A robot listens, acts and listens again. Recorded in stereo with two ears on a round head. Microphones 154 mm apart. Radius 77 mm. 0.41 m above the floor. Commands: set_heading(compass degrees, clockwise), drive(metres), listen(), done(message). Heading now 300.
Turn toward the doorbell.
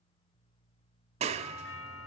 set_heading(210)
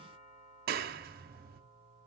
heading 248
set_heading(208)
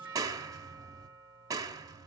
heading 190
set_heading(210)
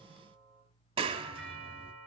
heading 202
done("Facing the doorbell.")